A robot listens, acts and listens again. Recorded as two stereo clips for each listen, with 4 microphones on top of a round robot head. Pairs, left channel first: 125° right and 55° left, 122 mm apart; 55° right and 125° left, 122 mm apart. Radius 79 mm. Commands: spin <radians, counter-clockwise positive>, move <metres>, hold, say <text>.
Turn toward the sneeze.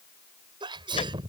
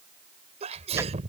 spin 1.75
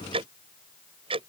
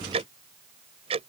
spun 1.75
say I heard a sneeze from this way, but can't make it out now.